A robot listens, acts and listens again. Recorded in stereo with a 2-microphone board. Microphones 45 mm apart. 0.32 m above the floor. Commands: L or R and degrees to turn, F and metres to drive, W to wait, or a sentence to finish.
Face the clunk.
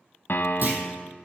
R45
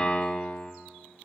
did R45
W
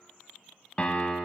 I heard a clunk, but can't make it out now. It was about straight ahead or 90° right.